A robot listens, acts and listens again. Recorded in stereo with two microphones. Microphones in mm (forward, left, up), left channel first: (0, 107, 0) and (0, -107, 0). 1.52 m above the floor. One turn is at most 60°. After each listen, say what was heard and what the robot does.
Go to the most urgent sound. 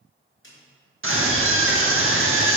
The scream: about 75° right or 105° right. Turn 60° right.
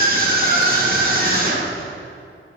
So it is at 45° right. Turn 45° right.
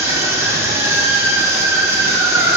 The scream is now 10° right. Turn 10° right.
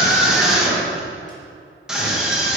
Drive 1.0 m forward.
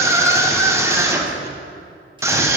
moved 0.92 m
The scream is now 15° right. Turn 15° right.
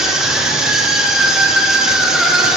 Drive 1.0 m forward.
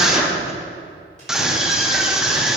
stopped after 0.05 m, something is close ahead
I am next to the scream.